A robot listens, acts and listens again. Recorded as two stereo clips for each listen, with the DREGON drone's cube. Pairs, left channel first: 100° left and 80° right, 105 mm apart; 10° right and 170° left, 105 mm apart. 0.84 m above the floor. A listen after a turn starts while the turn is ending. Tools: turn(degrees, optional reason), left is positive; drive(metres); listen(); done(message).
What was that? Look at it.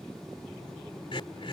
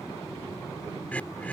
turn(degrees=65, reason="The throat clearing: 65° left.")
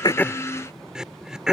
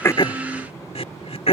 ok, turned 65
done("Found it: throat clearing, straight ahead.")